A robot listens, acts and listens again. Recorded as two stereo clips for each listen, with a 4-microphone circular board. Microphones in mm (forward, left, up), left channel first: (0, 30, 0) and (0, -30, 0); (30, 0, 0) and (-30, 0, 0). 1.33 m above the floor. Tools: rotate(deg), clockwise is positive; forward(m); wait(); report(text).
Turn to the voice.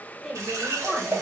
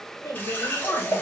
rotate(10)
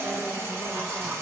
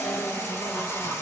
wait()
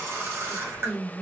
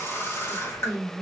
rotate(25)
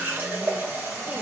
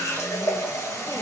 wait()
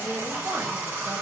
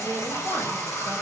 wait()
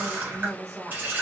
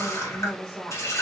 rotate(50)
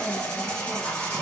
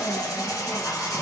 wait()
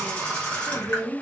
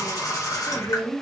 report("Found it: a woman speaking, straight ahead, 1 to 2 m away.")